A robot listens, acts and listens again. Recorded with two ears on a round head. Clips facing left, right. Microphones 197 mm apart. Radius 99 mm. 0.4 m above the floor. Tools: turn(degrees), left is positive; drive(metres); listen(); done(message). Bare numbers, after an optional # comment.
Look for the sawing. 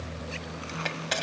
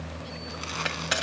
listen()
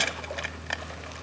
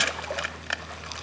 listen()
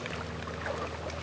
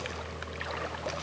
done("I can't make out sawing, only crushing.")